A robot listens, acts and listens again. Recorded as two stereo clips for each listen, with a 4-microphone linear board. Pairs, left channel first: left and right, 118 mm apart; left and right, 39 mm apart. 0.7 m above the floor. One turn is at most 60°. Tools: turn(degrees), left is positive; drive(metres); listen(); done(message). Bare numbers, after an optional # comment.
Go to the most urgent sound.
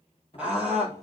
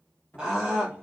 turn(-30)
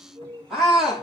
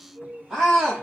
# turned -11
drive(1.0)
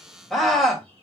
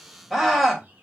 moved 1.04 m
drive(1.0)
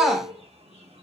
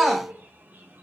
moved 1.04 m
drive(1.0)
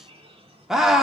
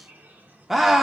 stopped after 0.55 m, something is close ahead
done("I am next to the scream.")